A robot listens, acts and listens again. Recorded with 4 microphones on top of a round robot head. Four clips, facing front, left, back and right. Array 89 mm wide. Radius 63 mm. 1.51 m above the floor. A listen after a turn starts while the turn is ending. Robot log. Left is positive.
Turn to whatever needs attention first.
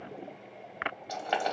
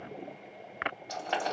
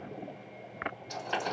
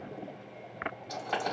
cmd idle
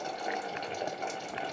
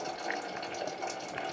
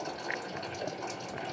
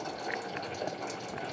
cmd idle
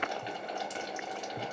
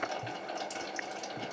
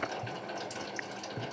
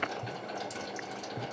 end: I can't make out anything urgent to turn to.